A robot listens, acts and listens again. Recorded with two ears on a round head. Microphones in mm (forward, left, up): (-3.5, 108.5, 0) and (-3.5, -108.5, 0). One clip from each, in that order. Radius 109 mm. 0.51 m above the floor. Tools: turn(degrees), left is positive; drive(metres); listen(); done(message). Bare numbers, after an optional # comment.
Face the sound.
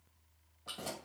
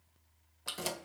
# The keys jangling: about 65° right or 115° right.
turn(-65)
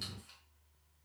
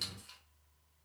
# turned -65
# So it is at 20° right.
turn(-20)
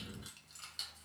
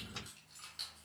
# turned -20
# The keys jangling is now 20° left.
turn(20)
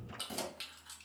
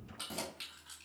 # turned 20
# The keys jangling is now 15° left.
turn(15)
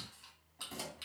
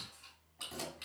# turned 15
# The keys jangling is now 10° left.
turn(10)
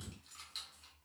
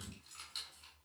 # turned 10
done("Facing the keys jangling.")